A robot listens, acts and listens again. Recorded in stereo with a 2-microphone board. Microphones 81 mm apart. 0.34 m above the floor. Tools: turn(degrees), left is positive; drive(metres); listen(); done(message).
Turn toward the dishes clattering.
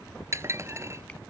turn(degrees=-35)
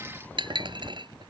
turn(degrees=-110)
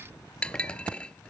turn(degrees=15)
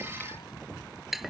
done("Found it: dishes clattering, straight ahead.")